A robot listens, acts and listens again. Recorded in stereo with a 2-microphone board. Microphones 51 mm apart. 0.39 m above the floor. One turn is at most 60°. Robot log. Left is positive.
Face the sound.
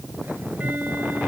note: The ticking: about 35° right or 145° right.
cmd yaw -35
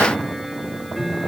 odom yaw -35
end: Facing the ticking.